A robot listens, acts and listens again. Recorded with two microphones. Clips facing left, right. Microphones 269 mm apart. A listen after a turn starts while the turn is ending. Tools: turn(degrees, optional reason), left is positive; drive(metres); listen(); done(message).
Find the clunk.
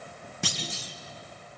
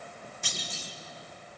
turn(degrees=90)
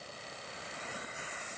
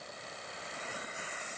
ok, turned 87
done("I heard a clunk from this way, but can't make it out now.")